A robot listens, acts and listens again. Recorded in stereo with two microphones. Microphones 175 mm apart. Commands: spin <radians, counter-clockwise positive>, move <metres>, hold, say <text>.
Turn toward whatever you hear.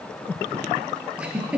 spin -0.52
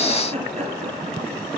spin -2.44
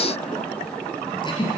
spin 0.52
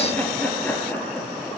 spin 0.17
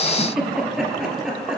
say Found it: a giggle, straight ahead, 2 to 4 m away.